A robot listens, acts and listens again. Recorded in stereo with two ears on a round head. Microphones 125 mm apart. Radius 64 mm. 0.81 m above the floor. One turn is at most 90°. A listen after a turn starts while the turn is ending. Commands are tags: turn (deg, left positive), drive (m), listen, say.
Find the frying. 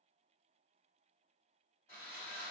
<listen/>
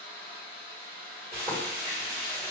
<turn deg="-15"/>
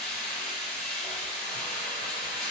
<say>Found it: frying, straight ahead, 1 to 2 m away.</say>